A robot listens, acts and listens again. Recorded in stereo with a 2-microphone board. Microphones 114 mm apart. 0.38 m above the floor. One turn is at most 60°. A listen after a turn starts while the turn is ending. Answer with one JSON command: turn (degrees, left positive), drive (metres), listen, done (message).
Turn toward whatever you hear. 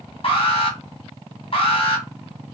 {"turn": 55}
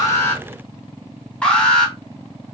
{"turn": 10}
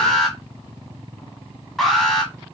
{"done": "Found it: an alarm, straight ahead, 1 to 2 m away."}